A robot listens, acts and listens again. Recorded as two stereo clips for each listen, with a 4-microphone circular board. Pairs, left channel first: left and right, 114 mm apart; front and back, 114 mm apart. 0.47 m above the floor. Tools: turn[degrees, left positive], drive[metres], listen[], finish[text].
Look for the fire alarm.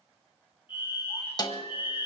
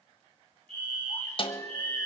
Thought: The fire alarm: 165° right.
Action: turn[-165]
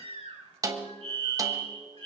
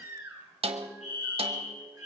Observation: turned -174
Thought: The fire alarm is now 10° left.
Action: turn[10]
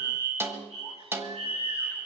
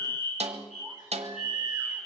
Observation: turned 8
Action: finish[Facing the fire alarm.]